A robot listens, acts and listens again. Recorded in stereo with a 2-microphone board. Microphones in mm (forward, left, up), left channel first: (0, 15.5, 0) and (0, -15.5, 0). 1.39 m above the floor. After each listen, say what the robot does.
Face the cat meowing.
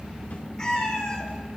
Turn 20° left.
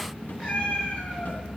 Turn 135° left.
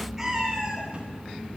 Turn 10° right.
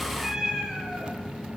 Found it: a cat meowing, straight ahead.